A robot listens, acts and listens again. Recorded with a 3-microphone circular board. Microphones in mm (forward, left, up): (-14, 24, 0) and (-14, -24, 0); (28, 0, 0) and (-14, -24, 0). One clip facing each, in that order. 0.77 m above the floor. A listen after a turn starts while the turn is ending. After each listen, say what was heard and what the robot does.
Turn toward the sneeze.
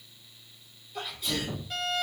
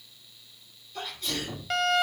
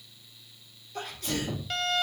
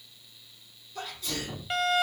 The sneeze: 10° left. Turn 10° left.
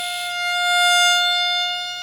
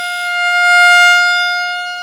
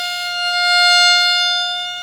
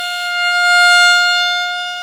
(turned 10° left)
I heard a sneeze from this way, but can't make it out now.